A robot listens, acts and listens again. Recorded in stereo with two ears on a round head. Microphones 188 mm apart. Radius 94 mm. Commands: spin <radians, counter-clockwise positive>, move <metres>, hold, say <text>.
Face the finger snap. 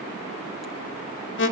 hold
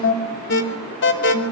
hold
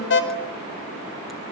say I can't make out a finger snap, only an alarm.